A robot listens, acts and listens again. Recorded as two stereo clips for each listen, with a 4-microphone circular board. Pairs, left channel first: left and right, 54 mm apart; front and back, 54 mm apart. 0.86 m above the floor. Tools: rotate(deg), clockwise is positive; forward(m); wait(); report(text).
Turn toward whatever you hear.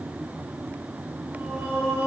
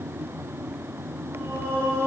rotate(135)
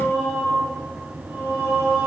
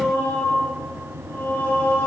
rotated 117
rotate(25)
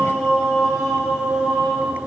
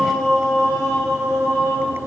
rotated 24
report("Found it: singing, straight ahead, over 4 m away.")